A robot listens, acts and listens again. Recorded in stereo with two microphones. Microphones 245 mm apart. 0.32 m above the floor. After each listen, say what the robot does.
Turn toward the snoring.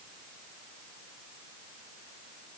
Keep listening.
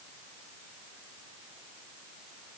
Keep listening.
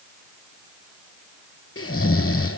Turn 60° left.
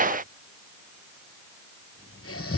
Turn 60° left.
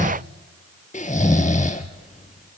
Turn 30° left.
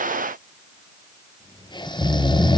Turn 20° left.
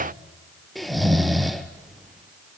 Found it: snoring, straight ahead, 1 to 2 m away.